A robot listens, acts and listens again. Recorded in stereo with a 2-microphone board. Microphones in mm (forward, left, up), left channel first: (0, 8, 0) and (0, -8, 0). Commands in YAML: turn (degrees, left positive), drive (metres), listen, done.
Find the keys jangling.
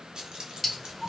turn: -75
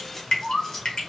turn: 20
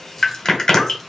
listen: true
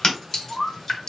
listen: true
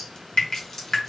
turn: 20
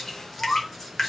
done: "Facing the keys jangling, 2 to 4 m away."